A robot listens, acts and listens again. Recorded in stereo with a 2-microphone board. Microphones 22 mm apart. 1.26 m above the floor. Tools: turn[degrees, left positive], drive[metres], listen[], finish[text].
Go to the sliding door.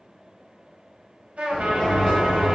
Thought: The sliding door: about 60° left or 120° left.
Action: turn[60]
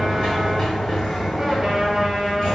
Thought: So it is at 35° left.
Action: turn[35]
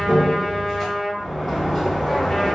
Thought: The sliding door is now 10° left.
Action: turn[10]
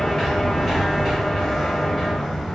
Action: drive[1.0]
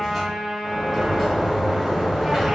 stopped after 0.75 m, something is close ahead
Action: finish[I am next to the sliding door.]